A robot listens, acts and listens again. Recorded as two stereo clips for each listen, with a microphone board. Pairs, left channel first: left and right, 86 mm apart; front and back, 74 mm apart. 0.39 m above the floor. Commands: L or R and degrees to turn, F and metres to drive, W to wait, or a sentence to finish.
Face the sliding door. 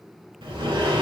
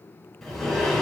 R85
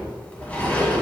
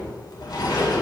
L15
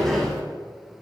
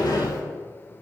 Facing the sliding door.